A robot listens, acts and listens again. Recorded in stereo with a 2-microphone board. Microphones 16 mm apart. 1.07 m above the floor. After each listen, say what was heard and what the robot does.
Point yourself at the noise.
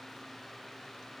Keep listening.
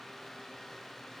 Keep listening.
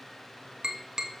The tapping: about 50° right or 130° right. Turn 50° right.
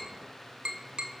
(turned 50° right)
So it is at 80° right. Turn 80° right.
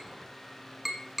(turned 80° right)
The tapping is now 10° right. Turn 10° right.
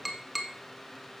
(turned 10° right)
Found it: tapping, straight ahead.